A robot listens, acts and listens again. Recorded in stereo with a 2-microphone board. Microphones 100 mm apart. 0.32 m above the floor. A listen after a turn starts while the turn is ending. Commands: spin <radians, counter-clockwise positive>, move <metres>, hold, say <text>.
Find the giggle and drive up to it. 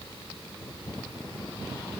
hold
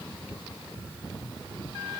hold
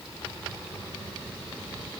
say I can't make out a giggle to turn to.